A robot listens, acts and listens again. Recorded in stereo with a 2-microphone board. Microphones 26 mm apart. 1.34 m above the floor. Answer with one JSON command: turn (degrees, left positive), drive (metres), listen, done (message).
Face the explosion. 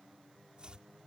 {"listen": true}
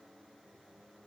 {"listen": true}
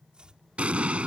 {"turn": -55}
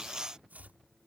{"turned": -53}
{"listen": true}
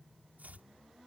{"done": "I heard an explosion, but can't make it out now. It was about straight ahead or 75° right."}